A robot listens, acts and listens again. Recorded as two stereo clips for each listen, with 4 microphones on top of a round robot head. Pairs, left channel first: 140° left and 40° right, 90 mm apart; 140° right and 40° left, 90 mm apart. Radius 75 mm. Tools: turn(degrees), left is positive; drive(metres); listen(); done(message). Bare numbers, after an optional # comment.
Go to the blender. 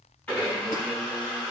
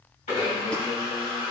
# The blender: 145° right.
turn(-145)
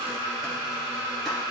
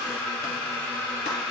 # The blender is now 70° right.
turn(-70)
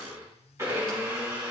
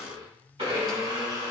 # The blender is now 15° left.
turn(15)
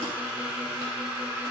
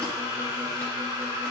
drive(1.0)
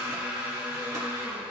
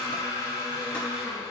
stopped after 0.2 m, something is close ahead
done("Something is in my way. I am facing the blender but have not reached it.")